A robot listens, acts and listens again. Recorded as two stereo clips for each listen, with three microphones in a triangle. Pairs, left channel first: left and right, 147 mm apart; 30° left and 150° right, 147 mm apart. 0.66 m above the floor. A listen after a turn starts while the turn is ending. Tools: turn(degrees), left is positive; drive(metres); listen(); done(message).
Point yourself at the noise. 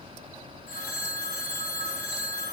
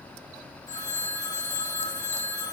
turn(degrees=95)
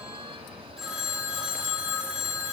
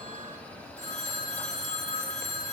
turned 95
done("Facing the phone ringing, 2 to 4 m away.")